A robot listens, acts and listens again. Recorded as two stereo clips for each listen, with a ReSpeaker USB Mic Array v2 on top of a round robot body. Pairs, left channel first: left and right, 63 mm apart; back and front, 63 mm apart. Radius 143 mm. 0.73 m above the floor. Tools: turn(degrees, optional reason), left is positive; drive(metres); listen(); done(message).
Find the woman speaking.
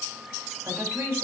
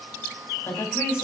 turn(degrees=-140, reason="The woman speaking: 140° right.")
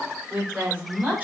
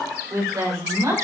turn(degrees=-25, reason="The woman speaking is now 25° right.")
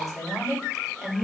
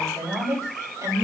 done("Facing the woman speaking.")